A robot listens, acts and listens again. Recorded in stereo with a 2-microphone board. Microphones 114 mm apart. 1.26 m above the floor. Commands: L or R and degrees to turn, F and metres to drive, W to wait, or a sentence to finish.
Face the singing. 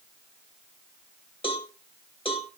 W
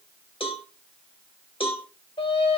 L55
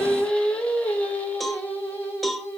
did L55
L20
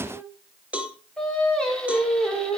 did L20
L10
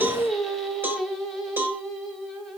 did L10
Facing the singing.